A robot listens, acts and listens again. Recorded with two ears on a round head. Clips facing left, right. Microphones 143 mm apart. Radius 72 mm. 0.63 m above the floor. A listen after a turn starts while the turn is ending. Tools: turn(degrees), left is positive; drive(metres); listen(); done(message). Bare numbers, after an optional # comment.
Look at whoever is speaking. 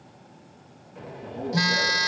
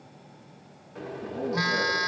# The man speaking: about 55° right or 125° right.
turn(-55)
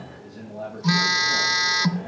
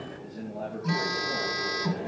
done("Facing the man speaking, over 4 m away.")